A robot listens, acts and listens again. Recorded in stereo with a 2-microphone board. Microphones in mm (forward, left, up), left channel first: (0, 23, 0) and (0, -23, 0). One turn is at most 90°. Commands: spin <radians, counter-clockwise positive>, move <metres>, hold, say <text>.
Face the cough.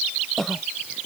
spin 0.52
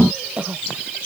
spin -0.44
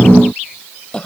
spin 0.35
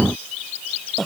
say Found it: a cough, straight ahead.